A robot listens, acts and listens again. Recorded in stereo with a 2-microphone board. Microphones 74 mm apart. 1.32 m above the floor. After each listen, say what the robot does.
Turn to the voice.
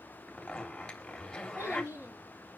Turn 35° right.
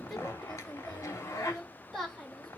Found it: a child speaking, straight ahead, over 4 m away.